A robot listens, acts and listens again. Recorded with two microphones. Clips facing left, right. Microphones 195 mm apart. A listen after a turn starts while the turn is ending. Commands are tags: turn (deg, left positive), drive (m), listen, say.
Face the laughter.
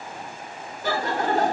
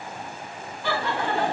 <turn deg="45"/>
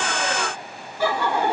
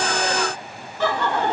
<turn deg="10"/>
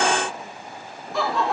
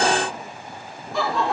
<say>Found it: laughter, straight ahead, 2 to 4 m away.</say>